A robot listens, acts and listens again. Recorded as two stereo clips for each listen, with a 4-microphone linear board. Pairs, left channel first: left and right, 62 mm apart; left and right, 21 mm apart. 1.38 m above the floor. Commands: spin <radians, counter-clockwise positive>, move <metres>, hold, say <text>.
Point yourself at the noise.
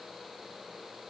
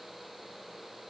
hold
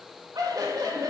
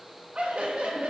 spin -1.57
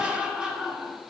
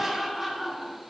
spin -0.26
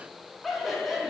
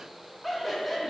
say Found it: laughter, straight ahead, over 4 m away.